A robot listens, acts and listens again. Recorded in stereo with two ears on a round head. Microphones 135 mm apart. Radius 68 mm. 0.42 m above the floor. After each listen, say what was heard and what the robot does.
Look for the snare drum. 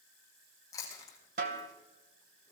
The snare drum: about 60° right or 120° right. Turn 60° right.
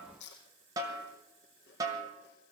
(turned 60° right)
So it is at 25° right. Turn 25° right.
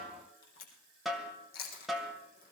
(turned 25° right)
Facing the snare drum.